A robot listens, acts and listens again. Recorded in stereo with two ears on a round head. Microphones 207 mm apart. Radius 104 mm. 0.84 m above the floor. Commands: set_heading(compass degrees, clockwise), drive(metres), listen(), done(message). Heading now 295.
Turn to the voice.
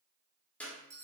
listen()
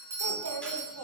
set_heading(25)
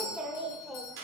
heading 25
done("Facing the child speaking, 1 to 2 m away.")